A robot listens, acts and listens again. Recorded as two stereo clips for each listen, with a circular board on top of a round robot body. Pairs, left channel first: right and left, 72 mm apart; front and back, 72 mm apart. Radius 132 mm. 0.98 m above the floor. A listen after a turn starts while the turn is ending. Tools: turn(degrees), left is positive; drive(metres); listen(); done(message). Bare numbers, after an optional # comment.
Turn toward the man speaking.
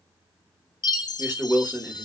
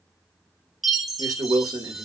# The man speaking: 150° left.
turn(150)
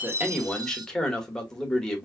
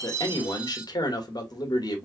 # The man speaking is now 10° right.
turn(-10)
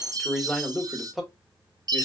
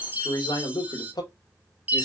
done("Found it: a man speaking, straight ahead.")